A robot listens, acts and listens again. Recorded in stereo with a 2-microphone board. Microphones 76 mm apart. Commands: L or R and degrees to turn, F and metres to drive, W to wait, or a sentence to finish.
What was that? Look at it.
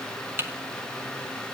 R30
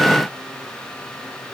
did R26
W
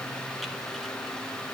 W
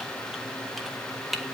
Facing the typing on a keyboard, 1 to 2 m away.